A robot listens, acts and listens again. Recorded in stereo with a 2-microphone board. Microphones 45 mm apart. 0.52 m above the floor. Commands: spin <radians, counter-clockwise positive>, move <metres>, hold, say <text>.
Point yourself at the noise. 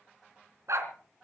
spin -1.57
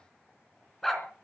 say Facing the dog barking.